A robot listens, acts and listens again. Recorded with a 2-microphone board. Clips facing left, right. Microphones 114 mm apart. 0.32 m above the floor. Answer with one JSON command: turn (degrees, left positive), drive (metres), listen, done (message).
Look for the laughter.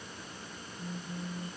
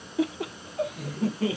{"turn": -70}
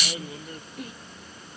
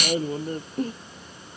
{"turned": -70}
{"turn": -35}
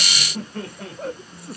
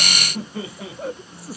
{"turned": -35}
{"done": "Found it: laughter, straight ahead."}